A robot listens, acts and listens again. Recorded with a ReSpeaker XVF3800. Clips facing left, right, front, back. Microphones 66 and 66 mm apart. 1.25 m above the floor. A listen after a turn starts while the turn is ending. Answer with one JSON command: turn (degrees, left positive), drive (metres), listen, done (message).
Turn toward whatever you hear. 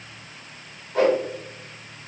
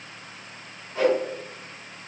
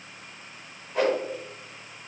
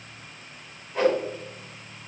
{"turn": 80}
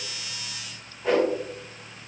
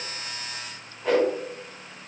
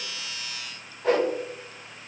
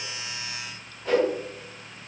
{"done": "Found it: a whoosh, straight ahead."}